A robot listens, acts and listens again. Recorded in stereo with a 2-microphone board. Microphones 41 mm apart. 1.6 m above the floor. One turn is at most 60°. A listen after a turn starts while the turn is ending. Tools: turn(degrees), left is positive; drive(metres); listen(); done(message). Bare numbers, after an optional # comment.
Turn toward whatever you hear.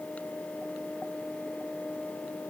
listen()
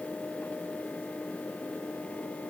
listen()
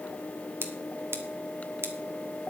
turn(-60)
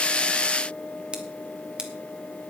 # So it is at 25° right.
turn(-25)
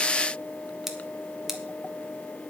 done("Facing the scissors.")